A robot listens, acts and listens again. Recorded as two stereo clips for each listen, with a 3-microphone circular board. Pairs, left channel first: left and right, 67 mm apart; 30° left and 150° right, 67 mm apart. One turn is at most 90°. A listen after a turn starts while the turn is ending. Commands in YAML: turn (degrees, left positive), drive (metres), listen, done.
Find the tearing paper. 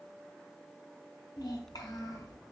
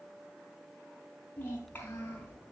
listen: true
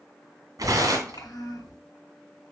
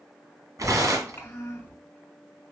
turn: -90
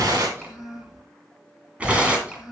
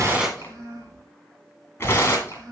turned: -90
turn: -20
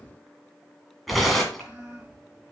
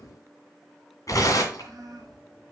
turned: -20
done: "Found it: tearing paper, straight ahead, 2 to 4 m away."